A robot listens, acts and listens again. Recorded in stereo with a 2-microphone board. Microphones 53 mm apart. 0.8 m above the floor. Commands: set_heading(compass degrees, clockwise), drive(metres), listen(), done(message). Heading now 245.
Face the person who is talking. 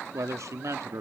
set_heading(315)
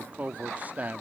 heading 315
set_heading(345)
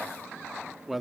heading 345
done("Found it: a man speaking, straight ahead.")